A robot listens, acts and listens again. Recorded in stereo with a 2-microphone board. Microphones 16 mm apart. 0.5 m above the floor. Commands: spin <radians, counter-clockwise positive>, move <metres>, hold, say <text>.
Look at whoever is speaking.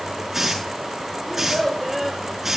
spin -0.52
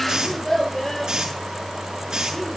spin 0.35
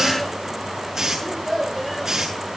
say Facing the child speaking.